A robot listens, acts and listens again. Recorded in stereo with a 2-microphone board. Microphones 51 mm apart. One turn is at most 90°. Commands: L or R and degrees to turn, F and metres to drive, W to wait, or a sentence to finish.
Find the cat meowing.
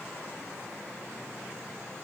W
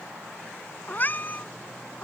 L35
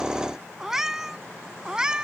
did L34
R15
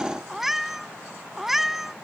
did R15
Facing the cat meowing.